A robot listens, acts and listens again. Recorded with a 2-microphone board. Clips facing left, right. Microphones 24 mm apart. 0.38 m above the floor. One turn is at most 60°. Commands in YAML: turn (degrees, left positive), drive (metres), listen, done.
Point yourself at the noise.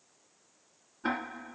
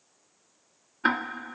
turn: -60
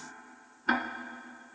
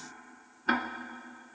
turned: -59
done: "Facing the ticking."